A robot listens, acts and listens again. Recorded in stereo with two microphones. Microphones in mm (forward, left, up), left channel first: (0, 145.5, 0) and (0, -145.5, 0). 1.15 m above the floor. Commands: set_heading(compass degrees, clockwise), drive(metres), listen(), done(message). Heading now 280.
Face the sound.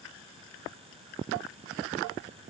listen()
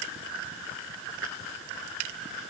listen()
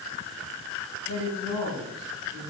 set_heading(190)
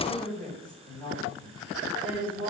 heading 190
done("Facing the woman speaking.")